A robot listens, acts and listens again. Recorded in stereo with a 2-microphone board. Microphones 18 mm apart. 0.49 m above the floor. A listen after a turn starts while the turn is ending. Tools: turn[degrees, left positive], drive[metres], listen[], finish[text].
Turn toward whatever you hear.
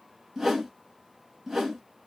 Thought: The whoosh: about 20° right or 160° right.
Action: turn[-20]
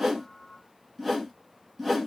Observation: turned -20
Action: finish[Facing the whoosh, 1 to 2 m away.]